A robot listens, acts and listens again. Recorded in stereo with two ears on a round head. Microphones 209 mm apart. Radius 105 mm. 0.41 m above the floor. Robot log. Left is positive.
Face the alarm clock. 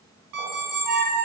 cmd yaw -90
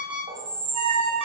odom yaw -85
end: Facing the alarm clock, 1 to 2 m away.